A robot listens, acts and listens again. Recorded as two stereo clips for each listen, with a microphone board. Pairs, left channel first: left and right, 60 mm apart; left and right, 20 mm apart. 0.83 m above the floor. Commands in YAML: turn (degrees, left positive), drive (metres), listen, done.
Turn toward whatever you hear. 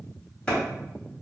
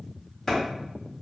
turn: 20
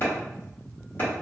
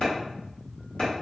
turn: 135
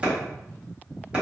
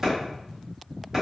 turn: -25
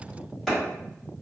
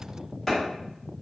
done: "Facing the clap, 1 to 2 m away."